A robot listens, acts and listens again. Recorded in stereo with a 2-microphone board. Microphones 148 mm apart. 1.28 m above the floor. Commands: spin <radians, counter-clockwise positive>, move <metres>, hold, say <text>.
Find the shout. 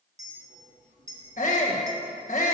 spin 0.96
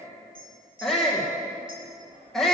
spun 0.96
say Found it: a shout, straight ahead, 1 to 2 m away.